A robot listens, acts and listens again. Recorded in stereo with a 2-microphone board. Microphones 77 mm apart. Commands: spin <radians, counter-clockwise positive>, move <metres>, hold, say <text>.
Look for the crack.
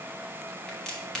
spin 0.52
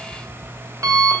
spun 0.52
hold
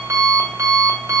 say I heard a crack, but can't make it out now. It was about 20° right or 140° left.